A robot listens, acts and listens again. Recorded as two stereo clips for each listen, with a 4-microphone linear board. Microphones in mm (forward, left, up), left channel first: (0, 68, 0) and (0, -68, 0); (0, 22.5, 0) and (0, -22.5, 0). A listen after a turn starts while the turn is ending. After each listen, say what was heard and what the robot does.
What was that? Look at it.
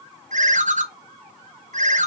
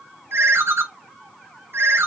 The ringtone: about 65° right or 115° right. Turn 65° right.
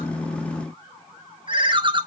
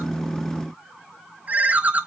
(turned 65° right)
So it is at 40° right. Turn 40° right.
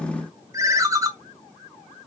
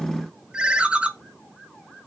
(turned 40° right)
The ringtone is now 25° right. Turn 25° right.
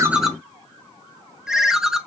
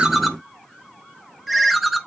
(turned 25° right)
Found it: a ringtone, straight ahead.